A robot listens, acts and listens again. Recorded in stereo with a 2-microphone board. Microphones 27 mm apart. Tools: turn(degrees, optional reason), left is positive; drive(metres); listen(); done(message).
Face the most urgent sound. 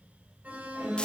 turn(degrees=-70, reason="The alarm: about 70° right or 110° right.")
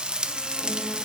listen()
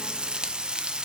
listen()
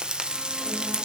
done("I heard an alarm, but can't make it out now. It was about straight ahead or 40° right.")